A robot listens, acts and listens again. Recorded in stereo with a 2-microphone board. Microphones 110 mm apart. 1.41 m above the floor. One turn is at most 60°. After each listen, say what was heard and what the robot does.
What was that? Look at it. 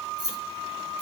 The keys jangling: about 40° right or 140° right. Turn 40° right.
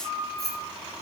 Facing the keys jangling.